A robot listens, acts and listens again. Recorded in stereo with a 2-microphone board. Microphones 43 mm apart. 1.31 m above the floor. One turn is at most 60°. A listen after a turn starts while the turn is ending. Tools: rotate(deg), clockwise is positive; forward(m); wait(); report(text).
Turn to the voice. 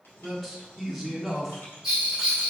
rotate(-30)
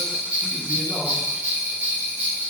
wait()
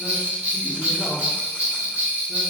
wait()
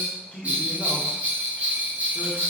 rotate(-60)
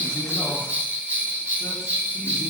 rotate(-60)
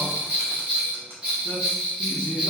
rotate(-35)
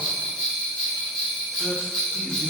wait()
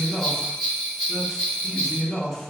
report("Found it: a man speaking, straight ahead, 1 to 2 m away.")